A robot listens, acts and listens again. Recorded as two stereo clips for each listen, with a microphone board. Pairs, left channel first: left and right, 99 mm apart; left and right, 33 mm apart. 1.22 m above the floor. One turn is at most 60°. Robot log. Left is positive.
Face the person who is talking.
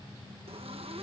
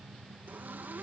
cmd idle
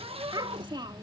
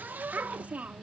note: The child speaking: about 50° right or 130° right.
cmd yaw -50
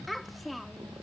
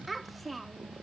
end: Found it: a child speaking, straight ahead.